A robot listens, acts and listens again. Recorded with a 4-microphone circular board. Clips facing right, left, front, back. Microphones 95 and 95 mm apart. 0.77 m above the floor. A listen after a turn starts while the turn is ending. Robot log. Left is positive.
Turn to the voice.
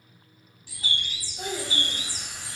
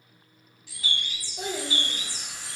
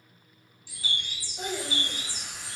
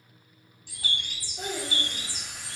note: The child speaking: 100° left.
cmd yaw +100
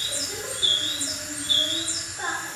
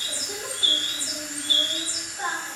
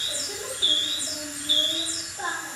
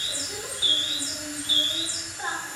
end: Found it: a child speaking, straight ahead, 1 to 2 m away.